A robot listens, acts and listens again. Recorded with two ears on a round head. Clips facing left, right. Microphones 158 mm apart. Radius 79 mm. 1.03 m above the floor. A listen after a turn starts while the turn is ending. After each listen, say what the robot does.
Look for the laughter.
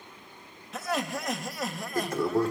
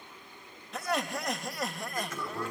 Turn 30° left.
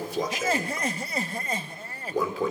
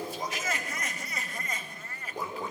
Turn 150° left.
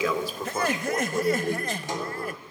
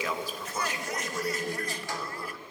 Turn 55° left.
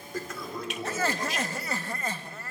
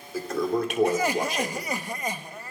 Turn 15° right.
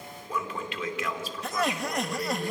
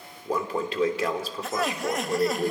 Found it: laughter, straight ahead.